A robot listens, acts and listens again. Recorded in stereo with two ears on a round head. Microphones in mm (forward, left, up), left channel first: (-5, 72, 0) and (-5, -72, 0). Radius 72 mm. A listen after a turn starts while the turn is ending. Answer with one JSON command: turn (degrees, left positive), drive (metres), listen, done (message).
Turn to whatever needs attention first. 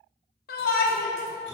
{"turn": 60}
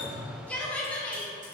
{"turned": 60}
{"turn": 10}
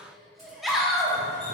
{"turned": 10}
{"done": "Found it: a shout, straight ahead."}